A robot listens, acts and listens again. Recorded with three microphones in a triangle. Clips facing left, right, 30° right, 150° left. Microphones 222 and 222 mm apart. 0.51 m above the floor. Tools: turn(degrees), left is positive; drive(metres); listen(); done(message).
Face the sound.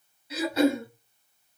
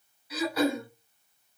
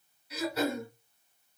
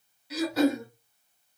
turn(degrees=150)
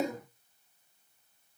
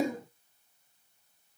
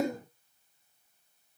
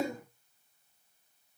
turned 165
turn(degrees=-10)
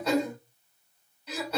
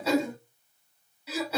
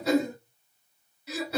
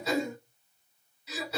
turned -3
done("Found it: throat clearing, straight ahead, 1 to 2 m away.")